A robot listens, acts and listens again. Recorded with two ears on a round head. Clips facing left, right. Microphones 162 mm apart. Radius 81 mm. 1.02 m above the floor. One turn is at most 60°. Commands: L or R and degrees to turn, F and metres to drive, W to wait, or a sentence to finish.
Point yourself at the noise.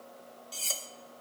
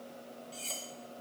L55
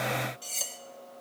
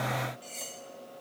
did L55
L60
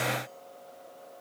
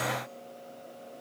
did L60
W
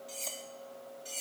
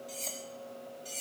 Found it: cutlery clinking, straight ahead.